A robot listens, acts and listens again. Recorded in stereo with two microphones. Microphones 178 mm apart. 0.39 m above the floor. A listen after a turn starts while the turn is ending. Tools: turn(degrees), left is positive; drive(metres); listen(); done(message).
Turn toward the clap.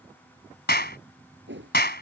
turn(degrees=60)
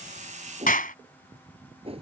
turn(degrees=50)
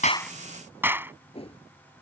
turn(degrees=-10)
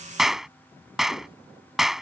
done("Facing the clap.")